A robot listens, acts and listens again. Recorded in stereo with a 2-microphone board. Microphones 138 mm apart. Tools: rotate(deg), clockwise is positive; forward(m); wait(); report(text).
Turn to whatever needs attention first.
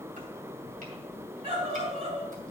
rotate(45)
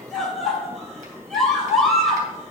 report("Found it: a scream, straight ahead, 2 to 4 m away.")